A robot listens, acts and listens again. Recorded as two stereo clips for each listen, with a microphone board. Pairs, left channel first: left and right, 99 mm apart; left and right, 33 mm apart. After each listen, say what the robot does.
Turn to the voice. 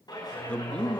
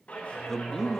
Turn 30° left.
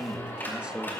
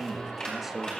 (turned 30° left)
Turn 15° right.
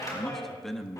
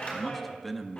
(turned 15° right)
Found it: a man speaking, straight ahead.